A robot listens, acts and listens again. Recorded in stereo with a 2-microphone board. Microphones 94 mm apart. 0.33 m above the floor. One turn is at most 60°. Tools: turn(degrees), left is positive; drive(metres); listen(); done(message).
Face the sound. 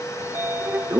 turn(degrees=-25)
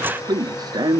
turn(degrees=-60)
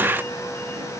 turn(degrees=-60)
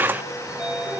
turn(degrees=-10)
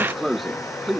done("Found it: a sliding door, straight ahead.")